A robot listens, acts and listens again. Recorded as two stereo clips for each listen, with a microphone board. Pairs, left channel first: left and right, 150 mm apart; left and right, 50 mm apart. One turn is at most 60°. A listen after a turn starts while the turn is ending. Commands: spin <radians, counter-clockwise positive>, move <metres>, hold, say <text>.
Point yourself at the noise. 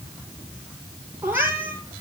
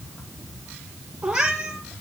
spin -0.52
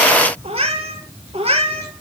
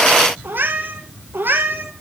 spin -1.05
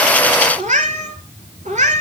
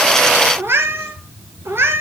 spin -1.05
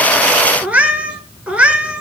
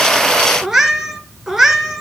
spin -0.17
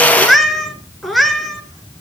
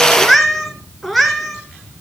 say Facing the cat meowing, 2 to 4 m away.